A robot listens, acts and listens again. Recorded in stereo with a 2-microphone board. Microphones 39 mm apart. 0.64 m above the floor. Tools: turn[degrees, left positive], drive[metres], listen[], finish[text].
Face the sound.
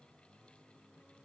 Action: listen[]
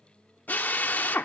Thought: The drill: about 60° left or 120° left.
Action: turn[60]
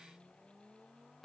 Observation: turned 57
Action: listen[]
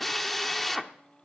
Thought: So it is at 10° left.
Action: turn[10]
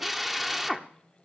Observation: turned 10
Action: finish[Facing the drill.]